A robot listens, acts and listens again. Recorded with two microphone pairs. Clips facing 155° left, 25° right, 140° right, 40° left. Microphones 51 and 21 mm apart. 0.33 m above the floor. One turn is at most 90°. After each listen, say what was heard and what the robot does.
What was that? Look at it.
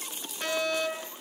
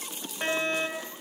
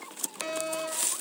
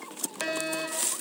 The fire alarm: 25° left. Turn 25° left.
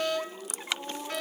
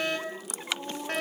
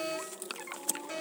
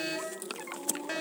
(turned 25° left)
Found it: a fire alarm, straight ahead, over 4 m away.